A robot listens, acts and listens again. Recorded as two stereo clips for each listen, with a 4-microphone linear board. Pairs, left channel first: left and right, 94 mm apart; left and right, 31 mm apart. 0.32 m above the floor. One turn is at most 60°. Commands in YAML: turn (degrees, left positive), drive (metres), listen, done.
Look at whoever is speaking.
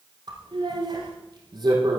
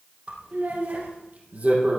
turn: -60
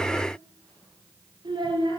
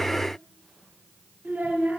turn: -55
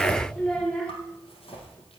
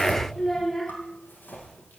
turn: 10
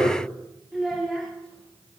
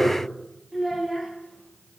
done: "Found it: a child speaking, straight ahead."